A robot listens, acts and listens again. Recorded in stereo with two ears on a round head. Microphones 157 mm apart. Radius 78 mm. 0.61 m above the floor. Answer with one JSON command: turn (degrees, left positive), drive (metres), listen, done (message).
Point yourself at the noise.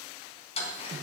{"turn": 35}
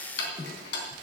{"turn": 110}
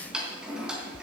{"done": "Facing the ticking, 2 to 4 m away."}